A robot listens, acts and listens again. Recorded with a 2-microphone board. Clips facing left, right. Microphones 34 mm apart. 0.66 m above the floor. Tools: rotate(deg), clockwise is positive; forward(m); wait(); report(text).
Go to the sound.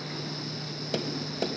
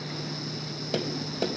rotate(30)
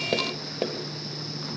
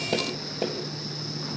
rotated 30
rotate(-25)
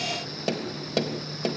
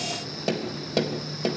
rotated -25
forward(1.0)
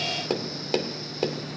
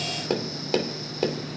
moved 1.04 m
forward(1.0)
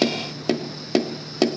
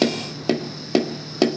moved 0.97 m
forward(1.0)
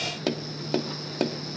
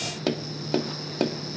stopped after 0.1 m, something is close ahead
report("Arrived at the tapping, straight ahead.")